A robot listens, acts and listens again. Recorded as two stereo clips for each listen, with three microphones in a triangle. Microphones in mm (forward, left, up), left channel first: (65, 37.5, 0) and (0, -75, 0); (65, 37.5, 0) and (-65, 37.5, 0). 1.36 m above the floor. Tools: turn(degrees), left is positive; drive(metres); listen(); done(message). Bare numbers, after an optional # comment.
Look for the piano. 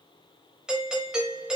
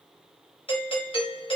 listen()
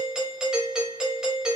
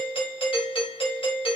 listen()
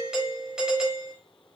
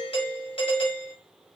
done("I can't make out a piano, only a doorbell.")